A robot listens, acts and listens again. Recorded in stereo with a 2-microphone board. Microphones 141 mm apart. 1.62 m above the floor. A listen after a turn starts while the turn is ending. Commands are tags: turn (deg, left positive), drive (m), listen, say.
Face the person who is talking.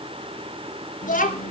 <turn deg="70"/>
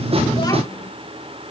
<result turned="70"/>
<listen/>
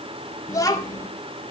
<turn deg="25"/>
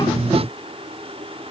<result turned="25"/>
<listen/>
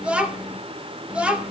<turn deg="-10"/>
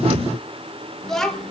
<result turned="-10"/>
<say>Facing the child speaking.</say>